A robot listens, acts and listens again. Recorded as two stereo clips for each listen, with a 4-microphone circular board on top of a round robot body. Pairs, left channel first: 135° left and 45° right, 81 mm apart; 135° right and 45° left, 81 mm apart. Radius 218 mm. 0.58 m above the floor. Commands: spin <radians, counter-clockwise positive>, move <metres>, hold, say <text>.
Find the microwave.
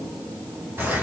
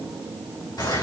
hold
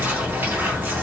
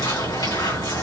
hold
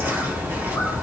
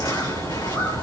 say I can't make out a microwave, only a bird.